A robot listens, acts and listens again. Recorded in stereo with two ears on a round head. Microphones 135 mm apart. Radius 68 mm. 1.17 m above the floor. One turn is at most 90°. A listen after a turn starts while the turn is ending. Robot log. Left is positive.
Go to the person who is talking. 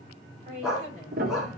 note: The woman speaking: about 50° right or 130° right.
cmd yaw -50
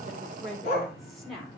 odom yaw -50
cmd fwd 1.0
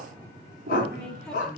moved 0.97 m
cmd idle
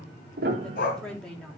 cmd fwd 1.0
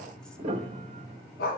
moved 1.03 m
cmd idle
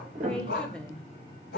cmd fwd 1.0
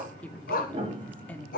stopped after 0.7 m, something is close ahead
note: The woman speaking is now 10° left.
cmd yaw +10
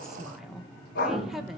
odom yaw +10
end: Arrived at the woman speaking, straight ahead.